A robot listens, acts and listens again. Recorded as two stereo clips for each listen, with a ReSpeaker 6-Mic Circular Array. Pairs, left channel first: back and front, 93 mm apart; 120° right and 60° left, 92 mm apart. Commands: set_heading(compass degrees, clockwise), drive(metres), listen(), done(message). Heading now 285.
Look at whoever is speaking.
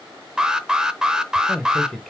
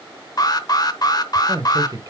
set_heading(190)
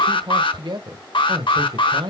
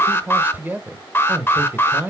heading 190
done("Facing the man speaking.")